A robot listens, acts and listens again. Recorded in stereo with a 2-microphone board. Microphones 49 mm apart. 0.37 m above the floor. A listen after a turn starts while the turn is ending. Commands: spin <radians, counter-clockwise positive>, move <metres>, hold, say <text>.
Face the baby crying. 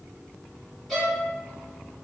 hold
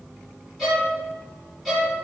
hold
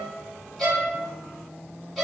say I can't make out a baby crying, only a violin.